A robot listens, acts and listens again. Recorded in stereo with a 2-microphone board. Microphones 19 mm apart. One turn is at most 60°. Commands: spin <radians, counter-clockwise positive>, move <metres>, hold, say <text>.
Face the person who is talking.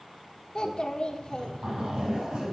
spin 0.87
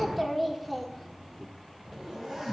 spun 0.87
say Found it: a child speaking, straight ahead.